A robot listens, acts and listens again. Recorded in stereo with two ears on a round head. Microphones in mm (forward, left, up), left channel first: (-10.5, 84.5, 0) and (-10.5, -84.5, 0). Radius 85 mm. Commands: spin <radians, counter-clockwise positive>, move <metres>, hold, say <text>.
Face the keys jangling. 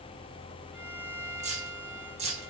spin -0.61
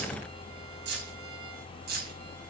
spin -2.18
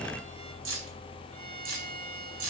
spin -1.22
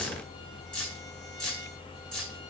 say Facing the keys jangling.